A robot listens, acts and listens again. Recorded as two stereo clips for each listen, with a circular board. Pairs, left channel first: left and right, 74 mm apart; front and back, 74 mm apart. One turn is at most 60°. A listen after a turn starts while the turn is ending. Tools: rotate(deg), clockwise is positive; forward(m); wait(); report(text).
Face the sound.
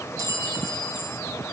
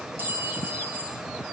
rotate(60)
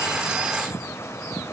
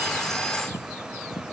rotate(60)
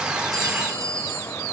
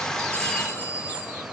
rotate(60)
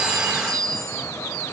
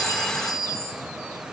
rotate(-10)
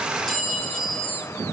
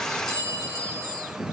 report("Found it: a clink, straight ahead, 1 to 2 m away.")